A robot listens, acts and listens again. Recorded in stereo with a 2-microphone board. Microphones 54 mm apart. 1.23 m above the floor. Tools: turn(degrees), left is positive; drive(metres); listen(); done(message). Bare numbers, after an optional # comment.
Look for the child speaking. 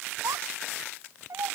turn(-90)
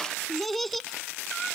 done("Found it: a child speaking, straight ahead.")